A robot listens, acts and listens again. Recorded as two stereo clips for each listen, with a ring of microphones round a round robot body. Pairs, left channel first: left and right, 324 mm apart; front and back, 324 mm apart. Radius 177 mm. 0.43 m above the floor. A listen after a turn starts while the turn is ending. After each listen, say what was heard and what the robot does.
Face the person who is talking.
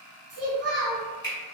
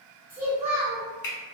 The child speaking: 120° right. Turn 120° right.
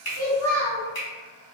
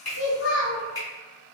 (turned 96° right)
The child speaking is now 25° right. Turn 25° right.
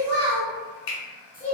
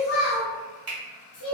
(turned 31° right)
Facing the child speaking, 1 to 2 m away.